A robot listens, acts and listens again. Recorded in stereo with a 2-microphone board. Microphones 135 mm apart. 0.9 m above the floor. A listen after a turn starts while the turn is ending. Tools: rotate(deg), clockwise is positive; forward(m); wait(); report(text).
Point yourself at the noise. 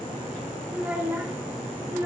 rotate(20)
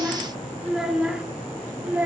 rotate(30)
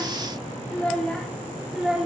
rotate(30)
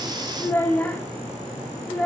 rotate(-10)
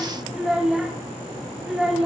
report("Found it: a child speaking, straight ahead, 1 to 2 m away.")